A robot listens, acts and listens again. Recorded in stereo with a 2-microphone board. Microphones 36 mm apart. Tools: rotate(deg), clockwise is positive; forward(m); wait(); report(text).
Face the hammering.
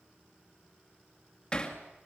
rotate(-25)
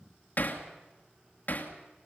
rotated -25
rotate(-130)
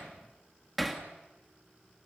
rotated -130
report("Found it: hammering, straight ahead, 2 to 4 m away.")